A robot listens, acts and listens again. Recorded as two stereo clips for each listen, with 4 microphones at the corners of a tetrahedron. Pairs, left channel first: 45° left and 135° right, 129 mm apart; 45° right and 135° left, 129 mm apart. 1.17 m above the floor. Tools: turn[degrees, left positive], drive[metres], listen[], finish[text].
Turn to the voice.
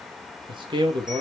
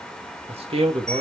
Thought: The man speaking: 175° left.
Action: turn[175]
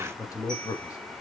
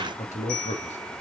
Thought: The man speaking is now 20° right.
Action: turn[-20]
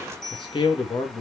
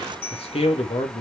Action: finish[Facing the man speaking.]